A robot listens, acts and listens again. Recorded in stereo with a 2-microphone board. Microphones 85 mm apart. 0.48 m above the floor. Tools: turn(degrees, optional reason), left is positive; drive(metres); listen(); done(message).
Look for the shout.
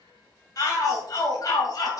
turn(degrees=45, reason="The shout: about 45° left or 135° left.")
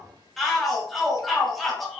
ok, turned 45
done("Facing the shout.")